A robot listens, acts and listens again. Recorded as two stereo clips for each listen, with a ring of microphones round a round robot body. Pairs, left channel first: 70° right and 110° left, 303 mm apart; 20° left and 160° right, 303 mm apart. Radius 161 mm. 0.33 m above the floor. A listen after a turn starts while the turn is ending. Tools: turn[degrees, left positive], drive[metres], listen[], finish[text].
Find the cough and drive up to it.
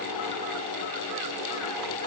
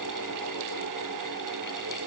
Action: listen[]
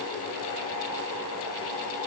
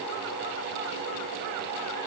Action: listen[]
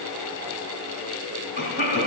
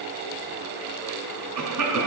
Thought: The cough: 120° right.
Action: turn[-120]
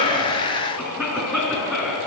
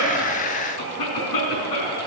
Thought: The cough is now 25° left.
Action: turn[25]
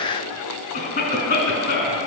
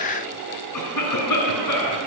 Action: drive[1.0]
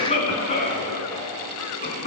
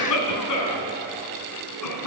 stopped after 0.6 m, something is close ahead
Action: finish[Something is in my way. I am facing the cough but have not reached it.]